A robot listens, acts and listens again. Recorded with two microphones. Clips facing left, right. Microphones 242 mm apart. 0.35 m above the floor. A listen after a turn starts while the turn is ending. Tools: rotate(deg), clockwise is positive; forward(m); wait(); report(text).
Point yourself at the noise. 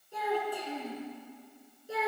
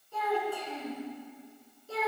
rotate(-30)
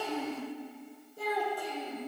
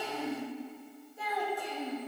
rotate(-135)
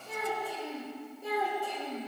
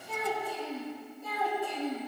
rotate(-35)
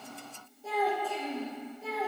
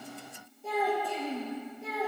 report("Facing the child speaking, over 4 m away.")